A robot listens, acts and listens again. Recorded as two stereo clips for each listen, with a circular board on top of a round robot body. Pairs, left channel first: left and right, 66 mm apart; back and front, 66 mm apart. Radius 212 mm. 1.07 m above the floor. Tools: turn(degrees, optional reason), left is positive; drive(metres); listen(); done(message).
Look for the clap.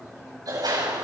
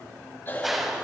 turn(degrees=-85, reason="The clap: 85° right.")
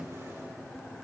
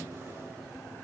listen()
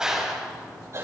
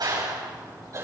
turn(degrees=-10, reason="The clap is now 10° right.")
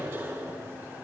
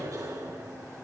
listen()
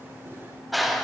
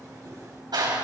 done("Facing the clap, over 4 m away.")